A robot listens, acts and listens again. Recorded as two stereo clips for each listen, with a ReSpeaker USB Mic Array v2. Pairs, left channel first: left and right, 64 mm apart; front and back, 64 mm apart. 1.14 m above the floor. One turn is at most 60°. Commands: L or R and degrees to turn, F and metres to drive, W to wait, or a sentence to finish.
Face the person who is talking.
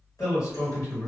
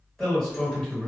L60
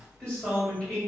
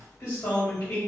L25
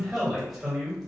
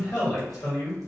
Found it: a man speaking, straight ahead.